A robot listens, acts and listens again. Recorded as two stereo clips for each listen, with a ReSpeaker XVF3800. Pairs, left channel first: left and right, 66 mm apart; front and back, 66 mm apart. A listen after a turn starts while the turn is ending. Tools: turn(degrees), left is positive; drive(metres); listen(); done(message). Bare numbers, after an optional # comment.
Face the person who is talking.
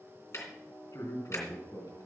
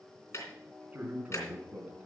# The man speaking: 115° left.
turn(115)
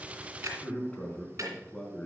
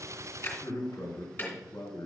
# The man speaking is now 15° left.
turn(15)
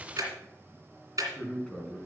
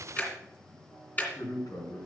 done("Facing the man speaking.")